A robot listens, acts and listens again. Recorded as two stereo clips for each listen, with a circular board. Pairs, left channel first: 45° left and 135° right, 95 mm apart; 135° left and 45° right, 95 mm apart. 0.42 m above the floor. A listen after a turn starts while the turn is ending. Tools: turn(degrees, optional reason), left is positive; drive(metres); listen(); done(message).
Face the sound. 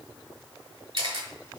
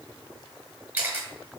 turn(degrees=-120, reason="The camera shutter: 120° right.")
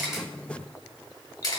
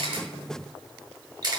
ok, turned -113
done("Facing the camera shutter, 1 to 2 m away.")